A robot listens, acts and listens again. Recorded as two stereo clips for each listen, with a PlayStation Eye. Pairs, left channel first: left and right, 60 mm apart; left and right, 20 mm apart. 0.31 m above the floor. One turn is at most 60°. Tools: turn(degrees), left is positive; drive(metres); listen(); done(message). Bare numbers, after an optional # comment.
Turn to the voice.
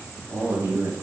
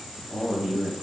# The man speaking: about 50° right or 130° right.
turn(-50)
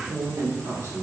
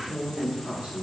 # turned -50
# So it is at 75° right.
turn(-60)
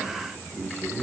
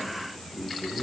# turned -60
# The man speaking is now 40° right.
turn(-40)
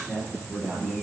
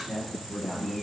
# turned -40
done("Facing the man speaking, over 4 m away.")